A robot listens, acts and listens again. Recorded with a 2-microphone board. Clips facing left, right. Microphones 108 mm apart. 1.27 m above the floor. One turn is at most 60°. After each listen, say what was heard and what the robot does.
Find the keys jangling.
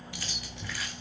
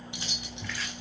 The keys jangling: about 20° right or 160° right. Turn 20° right.
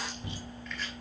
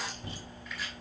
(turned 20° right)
Keep listening.
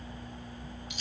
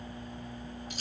So it is at 140° right. Turn 60° right.
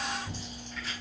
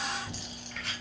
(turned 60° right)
Nothing new. It was at 80° right. Turn 60° right.
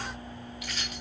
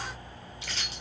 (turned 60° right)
Nothing new. It was at 20° right. Turn 20° right.
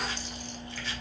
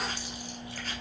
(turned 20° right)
Facing where the keys jangling came from. I can't hear it now.